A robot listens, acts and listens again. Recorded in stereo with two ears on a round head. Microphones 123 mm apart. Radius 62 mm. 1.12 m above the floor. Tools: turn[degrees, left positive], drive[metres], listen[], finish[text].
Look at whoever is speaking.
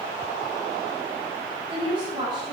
Thought: The woman speaking: about 35° right or 145° right.
Action: turn[-35]
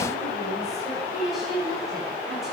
Action: finish[Facing the woman speaking.]